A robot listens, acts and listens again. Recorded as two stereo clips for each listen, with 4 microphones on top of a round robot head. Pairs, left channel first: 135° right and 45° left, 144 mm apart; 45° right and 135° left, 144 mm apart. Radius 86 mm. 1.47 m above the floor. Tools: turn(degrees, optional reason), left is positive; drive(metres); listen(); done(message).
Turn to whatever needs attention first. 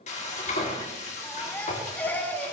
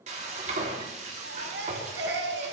turn(degrees=145, reason="The baby crying: 145° left.")
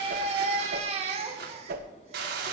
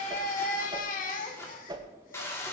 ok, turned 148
done("Facing the baby crying, 1 to 2 m away.")